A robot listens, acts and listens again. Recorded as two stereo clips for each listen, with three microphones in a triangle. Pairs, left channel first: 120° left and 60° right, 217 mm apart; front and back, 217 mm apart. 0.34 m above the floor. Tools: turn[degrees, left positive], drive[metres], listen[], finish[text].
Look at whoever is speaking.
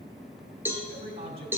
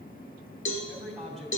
Thought: The man speaking: 90° right.
Action: turn[-90]
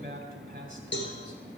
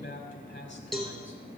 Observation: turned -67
Thought: The man speaking is now 20° right.
Action: turn[-20]
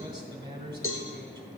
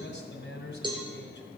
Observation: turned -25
Action: finish[Found it: a man speaking, straight ahead.]